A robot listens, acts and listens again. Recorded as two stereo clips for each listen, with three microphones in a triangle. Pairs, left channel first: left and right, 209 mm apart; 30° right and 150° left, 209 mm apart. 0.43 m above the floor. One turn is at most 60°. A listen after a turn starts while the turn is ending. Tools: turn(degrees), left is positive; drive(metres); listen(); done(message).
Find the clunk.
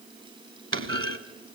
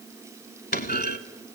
turn(degrees=-60)
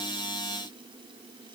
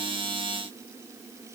turn(degrees=-15)
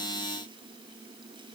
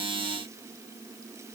done("I heard a clunk from this way, but can't make it out now.")